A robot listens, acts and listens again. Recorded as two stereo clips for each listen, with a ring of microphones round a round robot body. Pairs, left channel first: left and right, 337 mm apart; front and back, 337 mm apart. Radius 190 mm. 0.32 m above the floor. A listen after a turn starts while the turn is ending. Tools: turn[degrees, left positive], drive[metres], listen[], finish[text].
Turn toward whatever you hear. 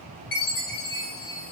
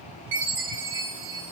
Thought: The chime: 120° left.
Action: turn[120]
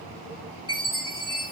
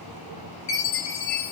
Thought: The chime is now 10° left.
Action: turn[10]
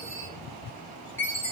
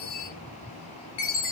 Action: finish[Found it: a chime, straight ahead.]